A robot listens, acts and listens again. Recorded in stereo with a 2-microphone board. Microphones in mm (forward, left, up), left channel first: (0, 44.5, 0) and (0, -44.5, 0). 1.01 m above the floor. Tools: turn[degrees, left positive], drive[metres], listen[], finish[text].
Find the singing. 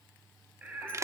Thought: The singing: about 15° right or 165° right.
Action: turn[-15]
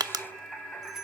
Action: turn[30]
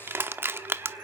Thought: So it is at 20° right.
Action: turn[-20]
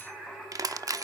Action: finish[Facing the singing.]